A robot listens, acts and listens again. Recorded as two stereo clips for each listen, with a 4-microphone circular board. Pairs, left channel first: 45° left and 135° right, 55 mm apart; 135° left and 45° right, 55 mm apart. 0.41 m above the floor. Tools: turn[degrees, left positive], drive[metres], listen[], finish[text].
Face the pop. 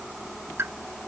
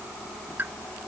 Thought: The pop: 95° right.
Action: turn[-95]
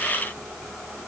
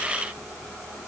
Action: finish[I heard a pop from this way, but can't make it out now.]